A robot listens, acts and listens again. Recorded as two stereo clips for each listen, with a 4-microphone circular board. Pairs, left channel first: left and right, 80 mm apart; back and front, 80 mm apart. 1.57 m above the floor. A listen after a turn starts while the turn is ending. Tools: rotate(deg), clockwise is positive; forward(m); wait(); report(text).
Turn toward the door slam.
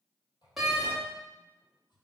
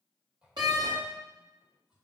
report("Facing the door slam.")